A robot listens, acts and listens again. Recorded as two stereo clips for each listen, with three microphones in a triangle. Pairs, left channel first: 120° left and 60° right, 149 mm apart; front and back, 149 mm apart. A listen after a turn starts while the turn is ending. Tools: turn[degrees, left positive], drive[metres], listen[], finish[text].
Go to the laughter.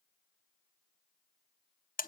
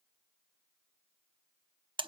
Action: listen[]
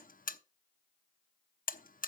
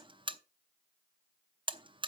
Action: listen[]
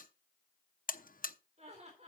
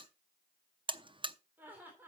Thought: The laughter: 105° right.
Action: turn[-105]
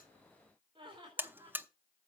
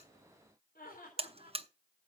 Action: drive[1.0]
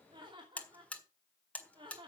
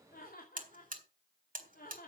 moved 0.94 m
Action: drive[1.0]
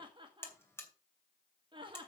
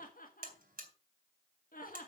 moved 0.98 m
Action: drive[1.0]
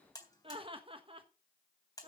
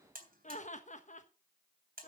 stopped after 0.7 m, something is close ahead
Thought: The laughter is now 15° right.
Action: turn[-15]
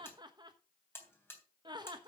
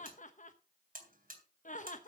Action: finish[I am next to the laughter.]